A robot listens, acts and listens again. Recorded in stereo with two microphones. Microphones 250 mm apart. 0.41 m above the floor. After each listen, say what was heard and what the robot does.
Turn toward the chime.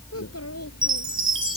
The chime: about 55° right or 125° right. Turn 55° right.
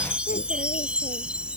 Found it: a chime, straight ahead.